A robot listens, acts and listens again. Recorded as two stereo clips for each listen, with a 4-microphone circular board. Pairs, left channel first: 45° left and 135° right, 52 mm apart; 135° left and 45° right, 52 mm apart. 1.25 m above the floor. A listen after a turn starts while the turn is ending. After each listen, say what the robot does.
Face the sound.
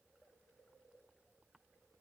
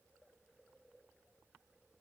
Keep listening.
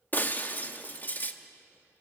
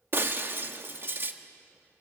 Found it: breaking glass, straight ahead.